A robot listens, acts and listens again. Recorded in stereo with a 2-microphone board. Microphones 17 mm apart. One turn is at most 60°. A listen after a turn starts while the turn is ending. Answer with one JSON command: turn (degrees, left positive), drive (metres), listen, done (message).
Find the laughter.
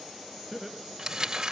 {"turn": 30}
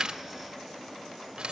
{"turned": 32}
{"listen": true}
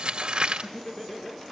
{"turn": 60}
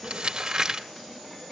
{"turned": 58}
{"turn": 60}
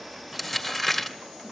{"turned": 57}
{"turn": 30}
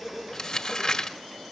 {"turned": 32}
{"done": "I heard laughter from this way, but can't make it out now."}